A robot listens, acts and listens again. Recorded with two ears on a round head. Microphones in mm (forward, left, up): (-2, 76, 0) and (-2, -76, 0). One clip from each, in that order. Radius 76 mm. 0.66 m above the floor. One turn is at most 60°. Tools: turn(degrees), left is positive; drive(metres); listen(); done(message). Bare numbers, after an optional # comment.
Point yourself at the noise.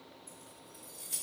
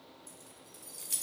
# The keys jangling: about 55° right or 125° right.
turn(-55)
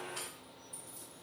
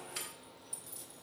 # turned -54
# So it is at 60° right.
turn(-60)
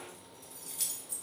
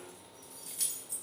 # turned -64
done("Facing the keys jangling.")